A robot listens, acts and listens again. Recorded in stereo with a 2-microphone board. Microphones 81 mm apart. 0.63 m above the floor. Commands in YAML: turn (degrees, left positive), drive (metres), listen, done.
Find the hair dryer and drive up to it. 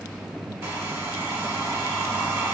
turn: -30
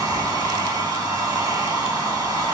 turn: -120
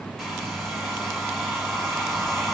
drive: 1.0
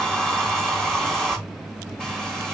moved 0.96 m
drive: 1.0
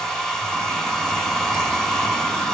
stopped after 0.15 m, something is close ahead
done: "I am next to the hair dryer."